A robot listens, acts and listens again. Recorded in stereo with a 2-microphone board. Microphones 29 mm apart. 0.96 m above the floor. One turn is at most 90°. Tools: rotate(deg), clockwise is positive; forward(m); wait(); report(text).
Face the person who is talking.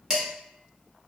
wait()
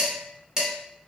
wait()
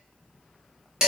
report("I can't make out anyone speaking, only dishes clattering.")